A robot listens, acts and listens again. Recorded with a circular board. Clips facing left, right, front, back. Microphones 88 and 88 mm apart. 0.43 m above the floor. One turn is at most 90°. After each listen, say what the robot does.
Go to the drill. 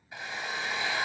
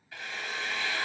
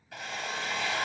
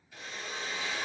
Turn 20° left.
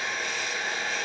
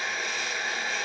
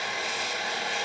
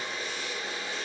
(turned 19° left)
Drive 1.0 m forward.
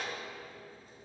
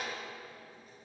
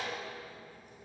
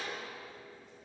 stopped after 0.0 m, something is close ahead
Something is in my way. I am facing the drill but have not reached it.